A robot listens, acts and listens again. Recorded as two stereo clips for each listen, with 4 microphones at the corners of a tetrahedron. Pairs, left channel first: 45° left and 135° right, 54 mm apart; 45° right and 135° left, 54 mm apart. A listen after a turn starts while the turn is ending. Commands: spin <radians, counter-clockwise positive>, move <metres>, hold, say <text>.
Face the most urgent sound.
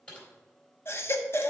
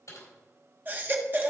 spin 1.48
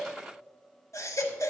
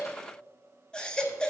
spin 0.52
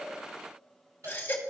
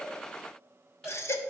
spin -0.17
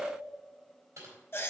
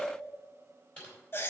say Facing the baby crying.